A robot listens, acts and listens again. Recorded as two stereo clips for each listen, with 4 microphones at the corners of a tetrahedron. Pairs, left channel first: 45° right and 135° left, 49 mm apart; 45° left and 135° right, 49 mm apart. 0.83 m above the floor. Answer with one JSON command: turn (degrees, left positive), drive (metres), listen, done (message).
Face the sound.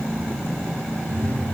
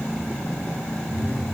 {"done": "Facing the phone buzzing, 1 to 2 m away."}